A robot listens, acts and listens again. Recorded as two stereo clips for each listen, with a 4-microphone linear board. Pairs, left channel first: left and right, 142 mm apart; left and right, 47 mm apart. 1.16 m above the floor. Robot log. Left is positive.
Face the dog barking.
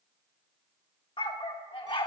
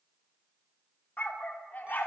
note: The dog barking: about 35° left or 145° left.
cmd yaw +35
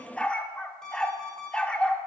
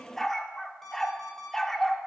note: So it is at 10° left.
cmd yaw +10
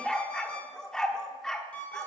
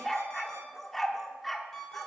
end: Found it: a dog barking, straight ahead, 1 to 2 m away.